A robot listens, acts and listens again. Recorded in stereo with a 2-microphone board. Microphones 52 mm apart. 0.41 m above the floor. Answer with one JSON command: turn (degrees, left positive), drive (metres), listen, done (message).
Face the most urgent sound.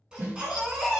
{"turn": -15}
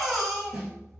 {"done": "Facing the baby crying, 1 to 2 m away."}